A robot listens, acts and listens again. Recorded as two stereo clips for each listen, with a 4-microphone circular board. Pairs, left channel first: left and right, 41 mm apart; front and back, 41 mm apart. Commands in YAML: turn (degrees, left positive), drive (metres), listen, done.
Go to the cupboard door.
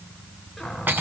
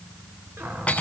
turn: 180
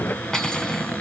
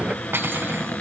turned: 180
turn: 45
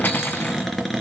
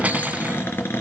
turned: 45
drive: 1.0
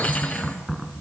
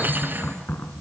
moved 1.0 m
drive: 1.0
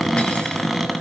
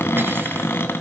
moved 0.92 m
drive: 1.0
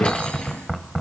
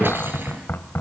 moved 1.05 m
drive: 1.0
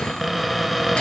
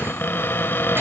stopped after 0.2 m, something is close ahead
done: "Arrived at the cupboard door, straight ahead."